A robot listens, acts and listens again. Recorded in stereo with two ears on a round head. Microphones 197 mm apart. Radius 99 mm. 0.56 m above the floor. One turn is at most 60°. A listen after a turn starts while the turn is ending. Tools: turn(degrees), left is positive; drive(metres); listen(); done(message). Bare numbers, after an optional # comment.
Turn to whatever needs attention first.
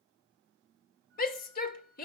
# The shout: about 40° left or 140° left.
turn(40)
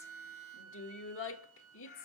# So it is at 90° left.
turn(60)
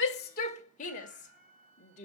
# The shout is now 40° left.
turn(40)
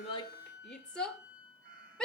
done("Found it: a shout, straight ahead, 1 to 2 m away.")